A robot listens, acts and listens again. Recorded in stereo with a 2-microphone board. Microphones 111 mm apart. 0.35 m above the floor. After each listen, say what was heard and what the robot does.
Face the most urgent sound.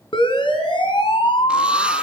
The siren: about 55° left or 125° left. Turn 55° left.
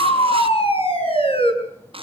So it is at 70° left. Turn 70° left.
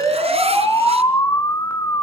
The siren is now 35° left. Turn 35° left.
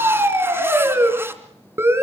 The siren is now 25° right. Turn 25° right.
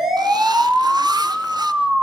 Facing the siren, over 4 m away.